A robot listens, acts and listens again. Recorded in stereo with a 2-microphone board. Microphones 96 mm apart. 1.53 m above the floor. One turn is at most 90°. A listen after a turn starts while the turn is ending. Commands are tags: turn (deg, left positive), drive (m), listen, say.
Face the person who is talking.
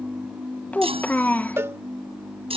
<turn deg="15"/>
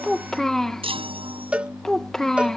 <say>Facing the child speaking.</say>